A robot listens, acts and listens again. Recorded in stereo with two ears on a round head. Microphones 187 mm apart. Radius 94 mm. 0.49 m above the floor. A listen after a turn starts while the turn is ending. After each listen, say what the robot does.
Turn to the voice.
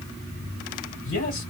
Turn 60° left.
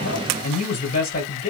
Turn 50° left.
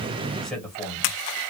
Facing the man speaking.